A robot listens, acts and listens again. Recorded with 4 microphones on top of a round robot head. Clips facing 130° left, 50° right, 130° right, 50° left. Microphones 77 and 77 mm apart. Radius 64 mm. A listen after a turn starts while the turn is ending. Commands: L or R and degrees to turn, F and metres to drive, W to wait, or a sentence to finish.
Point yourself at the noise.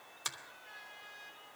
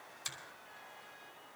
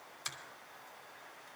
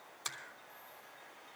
L95
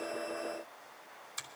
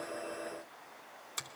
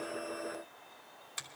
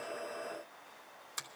R20
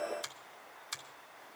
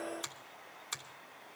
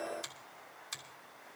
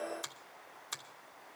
Found it: a finger snap, straight ahead, 1 to 2 m away.